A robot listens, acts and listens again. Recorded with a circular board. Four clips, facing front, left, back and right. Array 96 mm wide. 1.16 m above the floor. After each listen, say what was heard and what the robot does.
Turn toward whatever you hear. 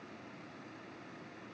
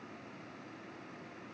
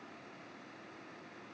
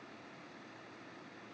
Keep listening.
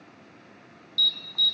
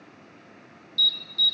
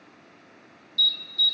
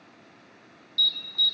The alarm: 10° right. Turn 10° right.
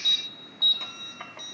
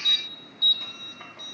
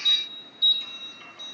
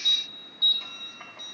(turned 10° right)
Found it: an alarm, straight ahead, under 1 m away.